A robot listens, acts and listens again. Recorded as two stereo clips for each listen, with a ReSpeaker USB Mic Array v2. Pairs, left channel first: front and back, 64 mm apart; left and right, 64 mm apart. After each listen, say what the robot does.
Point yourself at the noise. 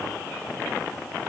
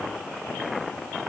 Keep listening.
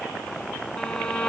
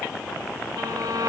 Turn 75° right.
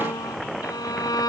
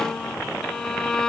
Turn 10° left.
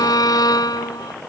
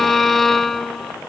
Found it: a violin, straight ahead.